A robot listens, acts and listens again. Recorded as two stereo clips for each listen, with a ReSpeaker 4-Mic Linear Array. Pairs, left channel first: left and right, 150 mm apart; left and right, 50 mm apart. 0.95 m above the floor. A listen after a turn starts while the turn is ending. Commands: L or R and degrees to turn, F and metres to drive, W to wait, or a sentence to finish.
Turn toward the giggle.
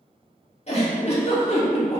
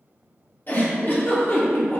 L45
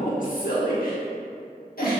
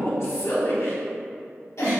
L90
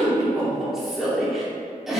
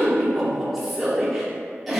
Found it: a giggle, straight ahead, 1 to 2 m away.